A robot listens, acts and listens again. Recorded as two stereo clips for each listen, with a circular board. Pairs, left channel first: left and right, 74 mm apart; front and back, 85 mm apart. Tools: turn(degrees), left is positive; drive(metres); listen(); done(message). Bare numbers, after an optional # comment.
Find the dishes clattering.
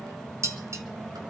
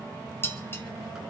# The dishes clattering: 55° right.
turn(-55)
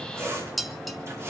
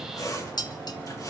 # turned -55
done("Facing the dishes clattering, 1 to 2 m away.")